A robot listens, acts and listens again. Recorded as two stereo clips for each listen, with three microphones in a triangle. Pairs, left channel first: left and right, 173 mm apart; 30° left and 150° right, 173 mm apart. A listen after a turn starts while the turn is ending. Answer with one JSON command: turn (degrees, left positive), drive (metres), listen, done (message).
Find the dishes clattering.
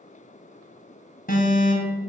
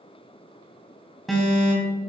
{"listen": true}
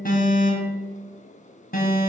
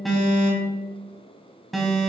{"listen": true}
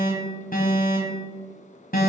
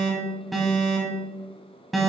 {"done": "I can't make out dishes clattering to turn to."}